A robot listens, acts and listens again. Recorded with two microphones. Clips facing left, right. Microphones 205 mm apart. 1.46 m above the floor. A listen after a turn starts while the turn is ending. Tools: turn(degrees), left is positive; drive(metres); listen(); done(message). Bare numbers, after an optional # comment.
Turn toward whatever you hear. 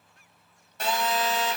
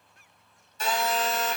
# The phone buzzing: about 70° left or 110° left.
turn(70)
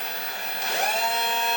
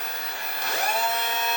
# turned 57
# So it is at 35° left.
turn(35)
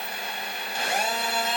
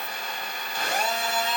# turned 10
# The phone buzzing is now 25° left.
turn(25)
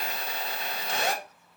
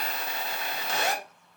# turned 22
done("Facing the phone buzzing.")